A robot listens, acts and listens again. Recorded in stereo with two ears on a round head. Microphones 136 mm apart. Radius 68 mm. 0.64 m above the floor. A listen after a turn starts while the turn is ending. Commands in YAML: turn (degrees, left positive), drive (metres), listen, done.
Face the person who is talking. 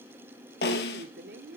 turn: -65
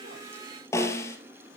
listen: true
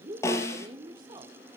turn: -30
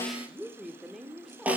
done: "Facing the woman speaking, 1 to 2 m away."